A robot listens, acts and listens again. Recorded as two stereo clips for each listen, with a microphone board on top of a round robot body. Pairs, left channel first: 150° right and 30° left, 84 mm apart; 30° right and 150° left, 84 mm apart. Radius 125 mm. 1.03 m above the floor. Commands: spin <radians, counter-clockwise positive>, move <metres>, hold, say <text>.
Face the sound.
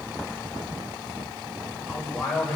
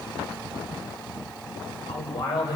spin -1.22
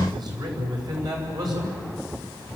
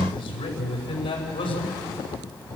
spin -0.26
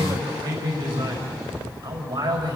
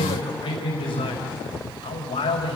say Facing the man speaking.